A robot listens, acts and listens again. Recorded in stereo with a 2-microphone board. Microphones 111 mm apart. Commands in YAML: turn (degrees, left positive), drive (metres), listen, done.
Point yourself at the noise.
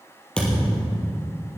turn: 30
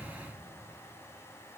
listen: true
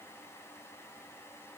done: "I heard a thud, but can't make it out now. It was about 20° right or 140° left."